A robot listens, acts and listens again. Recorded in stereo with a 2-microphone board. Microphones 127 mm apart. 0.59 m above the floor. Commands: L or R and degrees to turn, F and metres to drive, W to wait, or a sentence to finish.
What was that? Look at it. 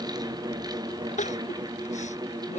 L70
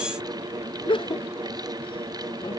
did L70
L40
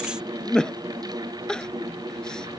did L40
Facing the crying.